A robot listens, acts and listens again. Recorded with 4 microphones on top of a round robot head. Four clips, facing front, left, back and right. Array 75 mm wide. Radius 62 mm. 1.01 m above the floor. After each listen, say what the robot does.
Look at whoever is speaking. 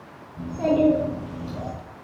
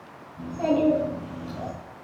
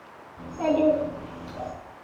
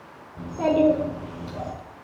Turn 90° right.
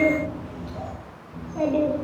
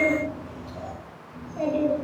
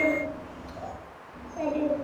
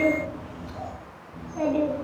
Turn 15° right.
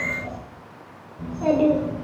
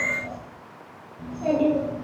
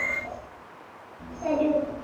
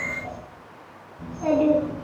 Turn 10° right.
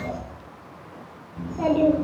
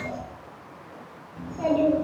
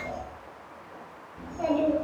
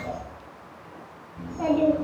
Facing the child speaking, 2 to 4 m away.